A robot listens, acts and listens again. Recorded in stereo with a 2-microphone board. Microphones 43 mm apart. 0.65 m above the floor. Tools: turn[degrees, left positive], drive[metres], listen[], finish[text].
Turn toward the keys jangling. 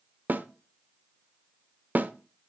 Action: listen[]
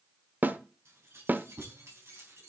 Action: turn[-90]
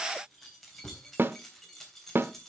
Action: finish[Found it: keys jangling, straight ahead.]